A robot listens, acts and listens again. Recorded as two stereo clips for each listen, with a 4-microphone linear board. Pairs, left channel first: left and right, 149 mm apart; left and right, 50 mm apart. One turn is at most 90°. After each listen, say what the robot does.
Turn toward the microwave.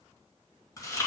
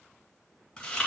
Keep listening.
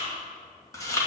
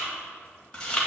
Keep listening.
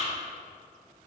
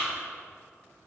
I can't make out a microwave, only chewing.